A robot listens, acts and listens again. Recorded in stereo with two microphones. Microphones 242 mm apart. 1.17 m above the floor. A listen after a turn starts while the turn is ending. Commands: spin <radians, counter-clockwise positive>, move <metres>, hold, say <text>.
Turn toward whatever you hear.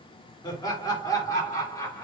spin 0.52
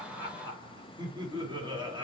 spin -0.35
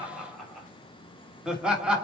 say Facing the laughter.